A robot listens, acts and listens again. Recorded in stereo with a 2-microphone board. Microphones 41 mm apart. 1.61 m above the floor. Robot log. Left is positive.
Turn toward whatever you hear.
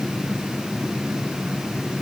cmd idle
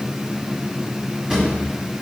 cmd yaw -30
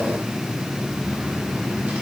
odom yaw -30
cmd idle
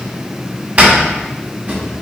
note: So it is at 135° right.
cmd yaw -135
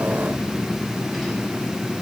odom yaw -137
cmd idle
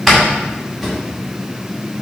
end: Found it: a drawer, straight ahead.